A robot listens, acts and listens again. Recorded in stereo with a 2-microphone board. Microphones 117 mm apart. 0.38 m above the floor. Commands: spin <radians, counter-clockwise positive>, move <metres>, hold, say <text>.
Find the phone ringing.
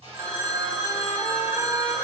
spin -0.35
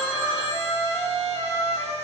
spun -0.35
say Facing the phone ringing.